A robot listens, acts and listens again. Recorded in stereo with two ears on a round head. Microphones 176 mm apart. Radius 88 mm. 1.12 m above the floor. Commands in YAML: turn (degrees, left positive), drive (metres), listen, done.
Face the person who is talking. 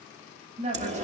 turn: -35
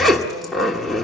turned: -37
listen: true
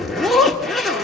listen: true
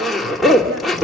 done: "I heard a woman speaking, but can't make it out now. It was about straight ahead or 105° right."